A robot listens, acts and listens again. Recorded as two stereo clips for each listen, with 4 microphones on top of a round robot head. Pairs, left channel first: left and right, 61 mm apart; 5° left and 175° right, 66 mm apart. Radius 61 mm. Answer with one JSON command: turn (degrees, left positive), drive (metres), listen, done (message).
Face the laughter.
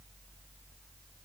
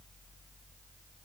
{"listen": true}
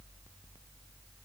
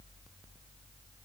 {"listen": true}
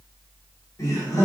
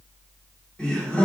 {"turn": 70}
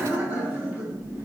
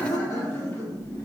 {"turn": -40}
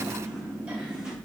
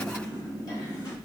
{"turn": -20}
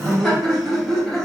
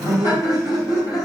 {"done": "Found it: laughter, straight ahead."}